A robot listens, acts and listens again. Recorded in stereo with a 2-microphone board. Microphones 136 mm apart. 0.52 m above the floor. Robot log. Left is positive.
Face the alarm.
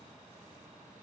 cmd idle
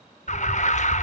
note: The alarm: about 60° left or 120° left.
cmd yaw +60
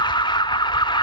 note: So it is at 40° left.
cmd yaw +40
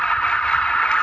end: Found it: an alarm, straight ahead, under 1 m away.